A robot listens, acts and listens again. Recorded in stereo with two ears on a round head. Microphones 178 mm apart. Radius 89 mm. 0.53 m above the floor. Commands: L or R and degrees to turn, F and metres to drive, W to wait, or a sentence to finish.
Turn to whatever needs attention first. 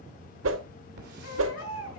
L90
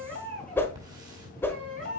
Facing the baby crying, over 4 m away.